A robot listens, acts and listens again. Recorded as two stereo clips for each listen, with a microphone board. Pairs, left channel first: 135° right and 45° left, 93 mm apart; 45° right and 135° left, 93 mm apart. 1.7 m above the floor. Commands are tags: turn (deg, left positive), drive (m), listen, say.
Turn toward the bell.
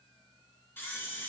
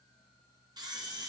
<listen/>
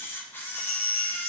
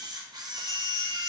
<turn deg="-85"/>
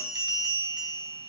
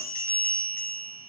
<turn deg="15"/>
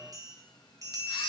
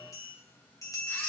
<say>Facing the bell.</say>